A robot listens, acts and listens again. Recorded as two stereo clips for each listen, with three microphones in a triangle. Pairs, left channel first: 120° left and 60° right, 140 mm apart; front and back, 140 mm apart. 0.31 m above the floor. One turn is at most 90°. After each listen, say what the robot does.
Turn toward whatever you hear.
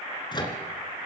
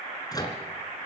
Turn 65° left.
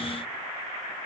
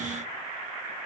Keep listening.
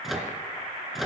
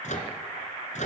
Turn 30° left.
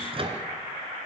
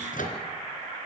Turn 10° right.
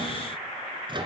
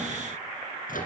Found it: a microwave, straight ahead.